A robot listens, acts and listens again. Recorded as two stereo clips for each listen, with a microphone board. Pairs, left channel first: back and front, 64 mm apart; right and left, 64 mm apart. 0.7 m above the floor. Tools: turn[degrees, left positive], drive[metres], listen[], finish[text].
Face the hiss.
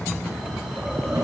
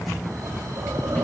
Action: listen[]
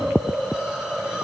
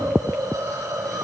Thought: The hiss: 80° left.
Action: turn[80]
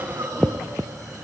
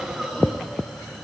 Action: finish[Found it: a hiss, straight ahead.]